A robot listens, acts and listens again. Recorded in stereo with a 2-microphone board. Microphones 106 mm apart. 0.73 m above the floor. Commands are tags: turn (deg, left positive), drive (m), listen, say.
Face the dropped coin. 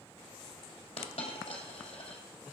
<turn deg="90"/>
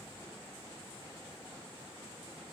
<say>I heard a dropped coin from this way, but can't make it out now.</say>